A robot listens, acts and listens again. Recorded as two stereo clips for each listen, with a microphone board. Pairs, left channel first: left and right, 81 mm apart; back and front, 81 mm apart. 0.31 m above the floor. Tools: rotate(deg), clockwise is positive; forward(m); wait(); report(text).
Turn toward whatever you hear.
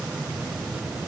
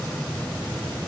wait()
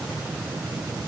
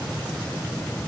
wait()
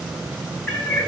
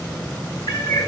rotate(-165)
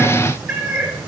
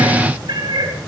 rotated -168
rotate(10)
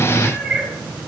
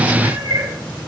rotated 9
report("Facing the cat meowing.")